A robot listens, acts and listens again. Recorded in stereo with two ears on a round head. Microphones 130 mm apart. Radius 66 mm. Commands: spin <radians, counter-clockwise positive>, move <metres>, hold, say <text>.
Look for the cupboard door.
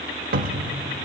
spin -1.13
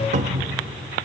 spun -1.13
spin -0.87
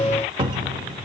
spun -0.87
spin -0.52
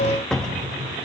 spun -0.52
say Facing the cupboard door.